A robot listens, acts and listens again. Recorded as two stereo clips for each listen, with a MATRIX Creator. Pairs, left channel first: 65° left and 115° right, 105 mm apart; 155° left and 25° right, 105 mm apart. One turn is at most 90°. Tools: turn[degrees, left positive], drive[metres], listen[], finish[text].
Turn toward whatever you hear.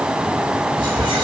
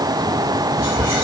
Thought: The whispering: 155° right.
Action: turn[-90]
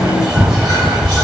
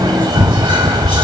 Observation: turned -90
Thought: The whispering is now 65° right.
Action: turn[-65]
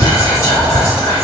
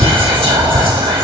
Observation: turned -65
Action: finish[Facing the whispering.]